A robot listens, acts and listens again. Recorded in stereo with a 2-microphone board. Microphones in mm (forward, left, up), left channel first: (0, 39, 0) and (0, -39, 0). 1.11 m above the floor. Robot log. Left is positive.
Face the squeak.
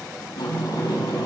cmd idle
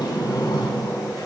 cmd idle
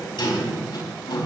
end: I can't make out a squeak to turn to.